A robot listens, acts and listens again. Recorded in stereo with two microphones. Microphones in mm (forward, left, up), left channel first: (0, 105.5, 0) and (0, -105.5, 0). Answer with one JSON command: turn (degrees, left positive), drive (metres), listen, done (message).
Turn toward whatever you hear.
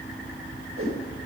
{"turn": -90}
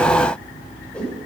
{"done": "Facing the whoosh."}